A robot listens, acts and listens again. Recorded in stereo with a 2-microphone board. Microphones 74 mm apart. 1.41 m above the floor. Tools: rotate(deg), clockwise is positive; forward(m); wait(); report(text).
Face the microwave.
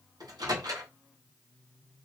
rotate(65)
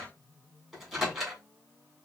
report("Found it: a microwave, straight ahead, 1 to 2 m away.")